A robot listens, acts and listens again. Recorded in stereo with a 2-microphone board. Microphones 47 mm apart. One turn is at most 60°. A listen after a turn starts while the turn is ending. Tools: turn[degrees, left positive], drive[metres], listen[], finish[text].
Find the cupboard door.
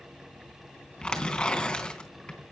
Action: listen[]
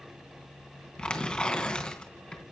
Action: listen[]
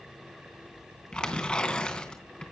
Action: finish[I can't make out a cupboard door to turn to.]